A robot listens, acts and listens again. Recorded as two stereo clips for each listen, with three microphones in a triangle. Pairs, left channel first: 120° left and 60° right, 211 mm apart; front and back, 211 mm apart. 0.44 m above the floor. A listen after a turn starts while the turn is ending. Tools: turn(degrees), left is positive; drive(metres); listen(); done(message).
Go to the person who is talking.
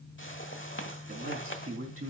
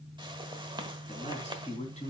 turn(degrees=-55)
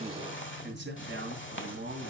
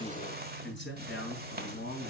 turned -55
turn(degrees=-30)
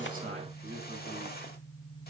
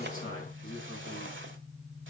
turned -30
turn(degrees=-10)
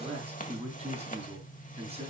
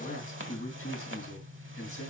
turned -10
drive(metres=1.0)
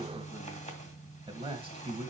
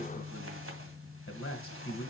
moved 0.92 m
drive(metres=1.0)
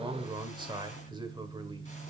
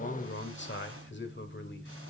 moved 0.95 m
drive(metres=1.0)
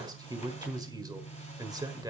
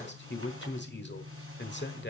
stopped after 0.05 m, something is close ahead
turn(degrees=10)
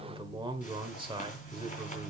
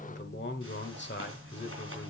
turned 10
done("I am next to the man speaking.")